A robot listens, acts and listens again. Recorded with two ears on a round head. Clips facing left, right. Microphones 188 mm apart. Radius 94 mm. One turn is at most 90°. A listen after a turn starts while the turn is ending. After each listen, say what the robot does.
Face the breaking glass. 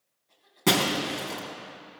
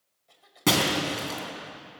Turn 30° right.
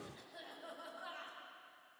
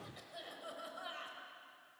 Keep listening.
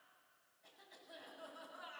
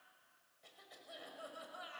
I heard breaking glass, but can't make it out now. It was about 25° left or 145° right.